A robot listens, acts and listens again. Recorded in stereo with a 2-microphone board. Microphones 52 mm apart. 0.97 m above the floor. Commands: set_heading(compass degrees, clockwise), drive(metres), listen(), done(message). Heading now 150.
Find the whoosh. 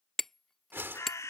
set_heading(195)
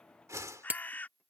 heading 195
set_heading(285)
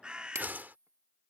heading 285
set_heading(320)
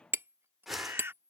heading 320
done("Facing the whoosh.")